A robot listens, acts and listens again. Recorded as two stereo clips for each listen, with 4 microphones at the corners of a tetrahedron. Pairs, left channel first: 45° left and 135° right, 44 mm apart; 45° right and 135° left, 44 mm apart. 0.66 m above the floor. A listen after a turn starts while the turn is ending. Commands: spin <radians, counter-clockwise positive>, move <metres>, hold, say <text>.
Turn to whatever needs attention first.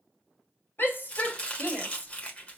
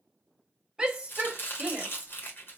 spin 1.05
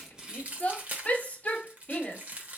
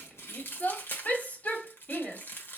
spin -0.17
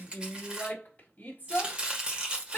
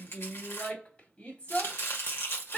say Facing the shout, 1 to 2 m away.